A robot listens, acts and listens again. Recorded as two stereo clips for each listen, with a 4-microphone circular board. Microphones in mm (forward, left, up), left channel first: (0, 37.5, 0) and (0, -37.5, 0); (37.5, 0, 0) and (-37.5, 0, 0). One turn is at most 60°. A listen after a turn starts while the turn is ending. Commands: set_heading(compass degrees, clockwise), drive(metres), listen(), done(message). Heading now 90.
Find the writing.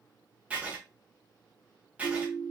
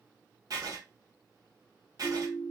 set_heading(150)
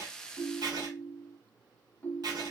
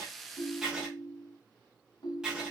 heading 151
set_heading(211)
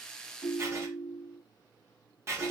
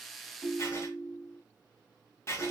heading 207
set_heading(252)
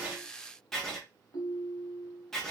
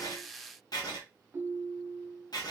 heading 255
done("Found it: writing, straight ahead, 1 to 2 m away.")